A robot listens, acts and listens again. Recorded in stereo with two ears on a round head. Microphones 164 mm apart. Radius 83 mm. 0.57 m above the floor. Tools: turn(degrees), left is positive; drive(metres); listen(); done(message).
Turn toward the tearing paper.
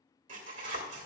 turn(degrees=-45)
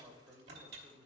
turn(degrees=-80)
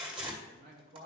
turn(degrees=-35)
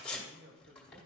done("Facing the tearing paper.")